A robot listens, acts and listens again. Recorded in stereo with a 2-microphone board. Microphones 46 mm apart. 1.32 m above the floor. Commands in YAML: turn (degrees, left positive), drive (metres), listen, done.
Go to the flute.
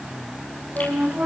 turn: -35
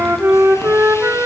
turn: -110
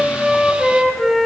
drive: 1.0
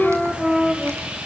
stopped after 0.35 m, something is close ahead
done: "Blocked. The flute is further on, straight ahead."